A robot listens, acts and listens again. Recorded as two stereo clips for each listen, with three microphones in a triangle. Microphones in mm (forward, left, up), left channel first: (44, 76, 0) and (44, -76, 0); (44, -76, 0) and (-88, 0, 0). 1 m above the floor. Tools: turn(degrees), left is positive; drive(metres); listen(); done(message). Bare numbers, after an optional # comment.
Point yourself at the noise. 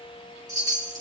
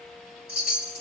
# The chime: 25° right.
turn(-25)
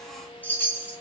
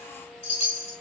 # The chime is now 10° left.
turn(10)
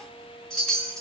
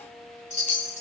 done("Facing the chime, 2 to 4 m away.")